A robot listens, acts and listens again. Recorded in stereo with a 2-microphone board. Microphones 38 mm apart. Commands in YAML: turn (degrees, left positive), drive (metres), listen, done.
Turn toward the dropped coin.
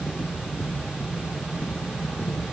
listen: true
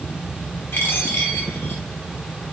turn: 75
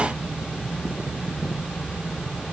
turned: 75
listen: true
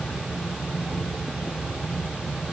done: "I heard a dropped coin, but can't make it out now. It was about straight ahead or 30° left."